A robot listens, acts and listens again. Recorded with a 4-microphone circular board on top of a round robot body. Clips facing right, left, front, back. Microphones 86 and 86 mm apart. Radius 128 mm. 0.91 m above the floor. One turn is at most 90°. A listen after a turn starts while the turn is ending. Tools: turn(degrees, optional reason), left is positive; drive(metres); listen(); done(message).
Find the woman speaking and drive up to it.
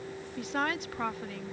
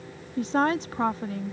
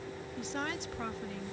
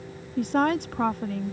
turn(degrees=90, reason="The woman speaking: 145° left.")
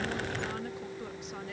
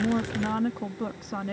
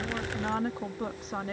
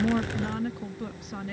turn(degrees=50, reason="The woman speaking is now 50° left.")
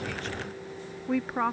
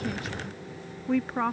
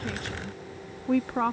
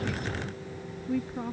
drive(metres=1.0)
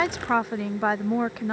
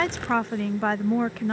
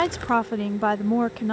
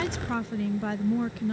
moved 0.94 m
turn(degrees=-10, reason="The woman speaking is now 10° right.")
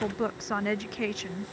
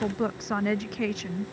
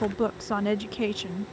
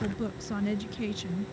drive(metres=1.0)
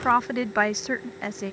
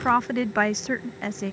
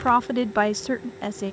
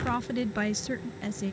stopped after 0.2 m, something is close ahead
done("Arrived at the woman speaking, straight ahead.")